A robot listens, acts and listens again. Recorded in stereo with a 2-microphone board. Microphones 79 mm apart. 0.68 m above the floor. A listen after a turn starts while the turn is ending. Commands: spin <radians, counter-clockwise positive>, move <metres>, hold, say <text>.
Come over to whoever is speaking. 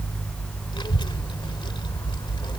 spin 1.57
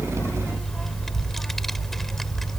move 1.0
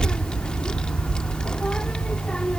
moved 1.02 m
spin 0.17
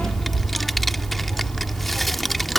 move 1.0
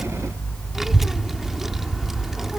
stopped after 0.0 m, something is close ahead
say I am next to the child speaking.